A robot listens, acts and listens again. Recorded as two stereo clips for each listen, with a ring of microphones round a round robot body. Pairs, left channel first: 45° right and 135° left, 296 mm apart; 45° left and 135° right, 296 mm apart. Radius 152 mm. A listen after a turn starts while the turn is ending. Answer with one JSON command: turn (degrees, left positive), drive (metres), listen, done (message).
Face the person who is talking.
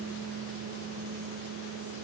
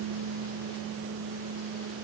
{"listen": true}
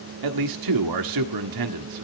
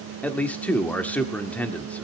{"turn": 130}
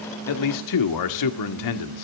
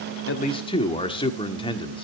{"turn": -30}
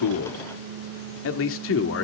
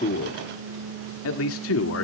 {"done": "Facing the man speaking, 1 to 2 m away."}